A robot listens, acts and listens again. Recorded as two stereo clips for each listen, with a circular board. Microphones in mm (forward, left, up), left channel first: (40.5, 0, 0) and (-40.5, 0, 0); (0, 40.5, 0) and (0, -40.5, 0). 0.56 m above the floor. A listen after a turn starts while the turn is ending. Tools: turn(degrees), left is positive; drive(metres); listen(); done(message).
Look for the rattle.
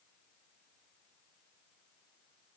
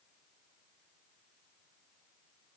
listen()
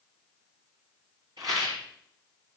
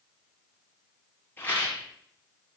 turn(degrees=150)
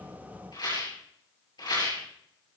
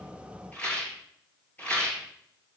turn(degrees=20)
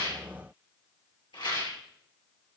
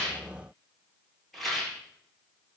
done("Found it: a rattle, straight ahead, over 4 m away.")